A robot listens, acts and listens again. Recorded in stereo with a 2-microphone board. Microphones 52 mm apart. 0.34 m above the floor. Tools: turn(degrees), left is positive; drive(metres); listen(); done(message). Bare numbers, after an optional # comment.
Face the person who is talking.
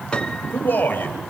# The man speaking: about 40° left or 140° left.
turn(40)
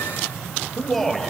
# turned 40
done("Facing the man speaking.")